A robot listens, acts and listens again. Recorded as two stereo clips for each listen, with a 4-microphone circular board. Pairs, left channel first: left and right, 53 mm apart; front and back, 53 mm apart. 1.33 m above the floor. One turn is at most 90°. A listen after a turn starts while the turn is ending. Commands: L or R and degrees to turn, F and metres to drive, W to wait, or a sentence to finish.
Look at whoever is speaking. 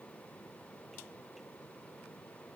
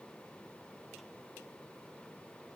W
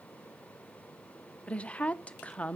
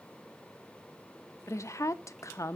L25
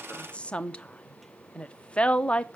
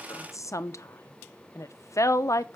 L20
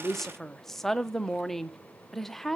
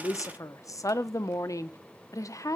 Found it: a woman speaking, straight ahead, under 1 m away.